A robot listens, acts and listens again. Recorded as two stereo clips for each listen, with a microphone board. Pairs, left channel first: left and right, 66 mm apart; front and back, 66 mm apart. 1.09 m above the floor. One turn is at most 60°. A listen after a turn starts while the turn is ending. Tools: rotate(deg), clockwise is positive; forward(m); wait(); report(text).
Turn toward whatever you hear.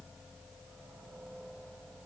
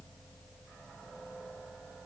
wait()
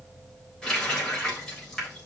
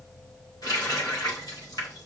rotate(-10)
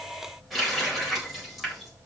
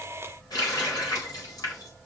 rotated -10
report("Facing the running tap, 2 to 4 m away.")